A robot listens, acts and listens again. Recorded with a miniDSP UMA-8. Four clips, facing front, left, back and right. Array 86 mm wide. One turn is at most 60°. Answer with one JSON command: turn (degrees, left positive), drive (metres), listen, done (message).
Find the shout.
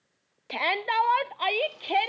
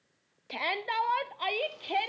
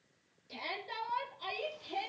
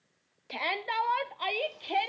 {"done": "Found it: a shout, straight ahead, under 1 m away."}